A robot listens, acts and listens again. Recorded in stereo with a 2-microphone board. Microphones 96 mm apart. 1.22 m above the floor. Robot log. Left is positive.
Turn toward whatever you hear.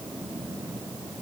cmd idle
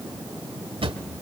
cmd yaw -90
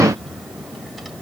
cmd idle
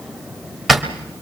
end: Found it: a drawer, straight ahead, 1 to 2 m away.